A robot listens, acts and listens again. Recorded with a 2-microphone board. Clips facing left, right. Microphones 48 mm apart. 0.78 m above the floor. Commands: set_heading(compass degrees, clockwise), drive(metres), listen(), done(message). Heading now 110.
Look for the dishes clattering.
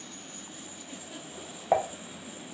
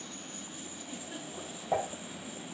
set_heading(55)
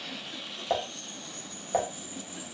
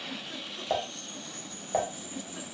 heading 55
done("Found it: dishes clattering, straight ahead, under 1 m away.")